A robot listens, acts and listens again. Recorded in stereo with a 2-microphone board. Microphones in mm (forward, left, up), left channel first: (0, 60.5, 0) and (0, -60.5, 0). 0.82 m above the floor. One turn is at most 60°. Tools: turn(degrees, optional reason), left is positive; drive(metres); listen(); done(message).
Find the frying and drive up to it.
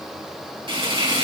turn(degrees=-50, reason="The frying: about 50° right or 130° right.")
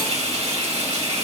turn(degrees=-60, reason="So it is at 85° right.")
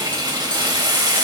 turn(degrees=-40, reason="The frying is now 40° right.")
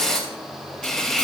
drive(metres=1.0)
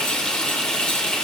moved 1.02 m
turn(degrees=10, reason="The frying is now 10° left.")
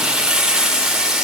drive(metres=1.0)
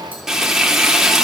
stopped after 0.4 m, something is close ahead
done("Arrived at the frying, straight ahead.")